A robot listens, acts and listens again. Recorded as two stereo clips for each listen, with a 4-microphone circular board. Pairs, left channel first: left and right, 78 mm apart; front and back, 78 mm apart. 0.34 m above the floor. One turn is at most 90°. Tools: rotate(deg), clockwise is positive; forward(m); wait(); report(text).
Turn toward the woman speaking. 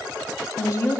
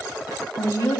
rotate(-45)
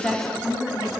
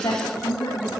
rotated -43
report("Found it: a woman speaking, straight ahead.")